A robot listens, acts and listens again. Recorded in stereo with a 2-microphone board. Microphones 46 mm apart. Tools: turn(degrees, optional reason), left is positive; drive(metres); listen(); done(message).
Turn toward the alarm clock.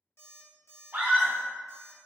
turn(degrees=70, reason="The alarm clock: about 70° left or 110° left.")
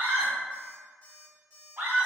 turn(degrees=40, reason="So it is at 40° left.")
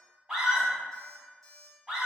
done("Found it: an alarm clock, straight ahead.")